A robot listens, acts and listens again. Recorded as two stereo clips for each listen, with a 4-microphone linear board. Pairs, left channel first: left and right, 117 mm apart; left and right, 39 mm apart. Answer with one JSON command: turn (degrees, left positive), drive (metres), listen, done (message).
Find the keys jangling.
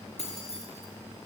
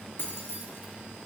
{"turn": 65}
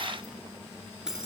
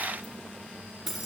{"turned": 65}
{"done": "Facing the keys jangling."}